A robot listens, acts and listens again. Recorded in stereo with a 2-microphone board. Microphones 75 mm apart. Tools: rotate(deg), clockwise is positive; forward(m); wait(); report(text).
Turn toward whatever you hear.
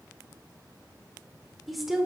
rotate(30)
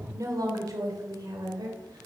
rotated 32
rotate(115)
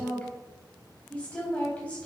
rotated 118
rotate(-20)
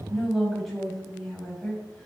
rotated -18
report("Facing the woman speaking.")